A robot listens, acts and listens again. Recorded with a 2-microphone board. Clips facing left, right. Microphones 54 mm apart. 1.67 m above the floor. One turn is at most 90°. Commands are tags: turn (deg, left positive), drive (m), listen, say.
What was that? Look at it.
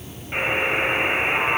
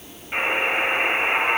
<turn deg="-30"/>
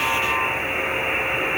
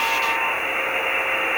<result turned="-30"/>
<turn deg="-90"/>
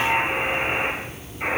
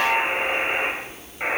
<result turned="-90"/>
<turn deg="-30"/>
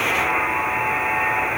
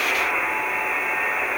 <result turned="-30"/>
<say>Found it: a buzzer, straight ahead.</say>